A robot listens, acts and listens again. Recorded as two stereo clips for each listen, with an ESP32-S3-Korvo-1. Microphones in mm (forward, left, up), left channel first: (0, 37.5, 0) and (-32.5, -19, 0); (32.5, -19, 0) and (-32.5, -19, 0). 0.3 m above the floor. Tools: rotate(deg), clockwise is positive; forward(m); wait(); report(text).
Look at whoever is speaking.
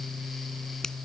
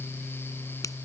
wait()
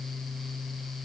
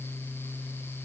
wait()
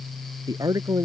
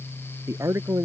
rotate(140)
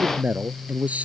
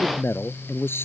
rotate(55)
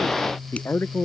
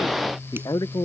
rotate(-10)
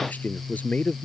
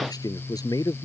report("Found it: a man speaking, straight ahead.")